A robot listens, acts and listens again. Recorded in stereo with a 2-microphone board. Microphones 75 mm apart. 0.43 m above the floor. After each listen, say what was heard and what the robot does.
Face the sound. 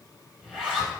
Turn 30° right.
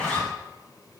So it is at 15° left. Turn 15° left.
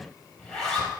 Found it: a zipper, straight ahead, over 4 m away.